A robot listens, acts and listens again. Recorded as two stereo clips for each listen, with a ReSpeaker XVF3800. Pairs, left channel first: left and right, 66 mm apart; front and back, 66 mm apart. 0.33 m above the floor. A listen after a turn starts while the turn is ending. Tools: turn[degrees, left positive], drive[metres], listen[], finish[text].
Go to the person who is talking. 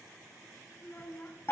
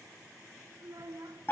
Thought: The child speaking: 150° left.
Action: turn[150]
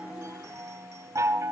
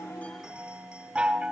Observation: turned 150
Action: listen[]
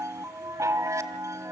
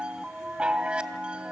Action: listen[]
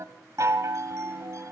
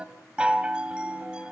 Action: finish[Facing where the child speaking came from. I can't hear it now. I did not reach it.]